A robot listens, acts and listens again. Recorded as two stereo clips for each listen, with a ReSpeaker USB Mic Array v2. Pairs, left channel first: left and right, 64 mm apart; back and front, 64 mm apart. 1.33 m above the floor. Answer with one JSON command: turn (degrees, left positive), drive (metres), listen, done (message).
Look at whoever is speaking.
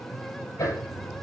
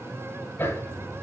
{"listen": true}
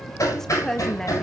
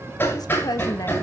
{"turn": 175}
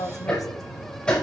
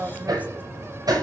{"turn": 65}
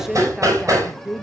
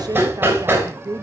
{"done": "Facing the woman speaking, 1 to 2 m away."}